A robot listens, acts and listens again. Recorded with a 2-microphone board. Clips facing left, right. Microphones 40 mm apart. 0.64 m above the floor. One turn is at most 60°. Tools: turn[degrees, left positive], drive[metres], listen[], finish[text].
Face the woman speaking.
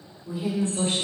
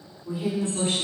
Thought: The woman speaking: about 50° right or 130° right.
Action: turn[-50]
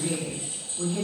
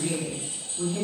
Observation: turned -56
Thought: So it is at 25° right.
Action: turn[-25]
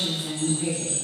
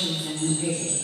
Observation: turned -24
Action: finish[Facing the woman speaking.]